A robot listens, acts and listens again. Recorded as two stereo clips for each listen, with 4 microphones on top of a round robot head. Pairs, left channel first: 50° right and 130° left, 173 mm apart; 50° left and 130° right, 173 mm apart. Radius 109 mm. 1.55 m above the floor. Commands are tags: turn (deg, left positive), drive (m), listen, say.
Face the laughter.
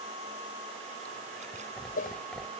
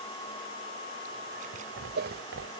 <turn deg="-135"/>
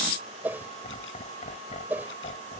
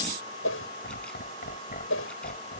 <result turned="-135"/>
<say>Found it: laughter, straight ahead.</say>